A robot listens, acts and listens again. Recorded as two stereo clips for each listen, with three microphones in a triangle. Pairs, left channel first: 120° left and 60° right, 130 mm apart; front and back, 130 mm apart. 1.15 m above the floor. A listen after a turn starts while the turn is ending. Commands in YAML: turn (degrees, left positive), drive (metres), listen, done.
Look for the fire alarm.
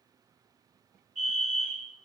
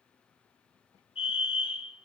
turn: -45
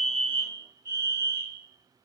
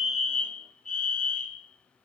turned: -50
done: "Found it: a fire alarm, straight ahead."